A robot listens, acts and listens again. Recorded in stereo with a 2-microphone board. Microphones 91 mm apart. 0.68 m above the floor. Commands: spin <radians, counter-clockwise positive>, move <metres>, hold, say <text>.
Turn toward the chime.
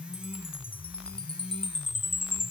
spin 1.22
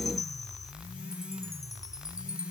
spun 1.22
spin 0.70
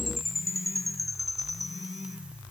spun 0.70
say Found it: a chime, straight ahead.